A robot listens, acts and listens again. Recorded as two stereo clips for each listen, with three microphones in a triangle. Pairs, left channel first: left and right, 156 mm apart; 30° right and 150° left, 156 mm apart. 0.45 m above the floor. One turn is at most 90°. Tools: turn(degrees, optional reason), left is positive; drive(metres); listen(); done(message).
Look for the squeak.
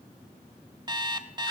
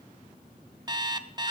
listen()
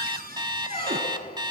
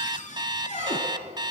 turn(degrees=90, reason="The squeak: 105° left.")
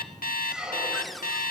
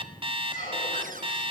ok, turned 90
done("Found it: a squeak, straight ahead, over 4 m away.")